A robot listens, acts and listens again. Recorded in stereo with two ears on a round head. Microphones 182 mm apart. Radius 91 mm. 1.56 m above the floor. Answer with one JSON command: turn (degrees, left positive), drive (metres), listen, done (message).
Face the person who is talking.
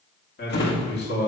{"turn": 55}
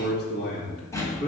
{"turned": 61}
{"turn": 50}
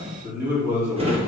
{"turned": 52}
{"turn": -15}
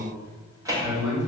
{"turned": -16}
{"done": "Found it: a man speaking, straight ahead."}